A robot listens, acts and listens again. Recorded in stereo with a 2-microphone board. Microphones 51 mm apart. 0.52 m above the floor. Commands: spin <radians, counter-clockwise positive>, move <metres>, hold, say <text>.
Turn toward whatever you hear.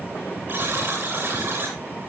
spin -0.87
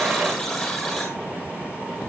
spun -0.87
say Found it: a buzzer, straight ahead, over 4 m away.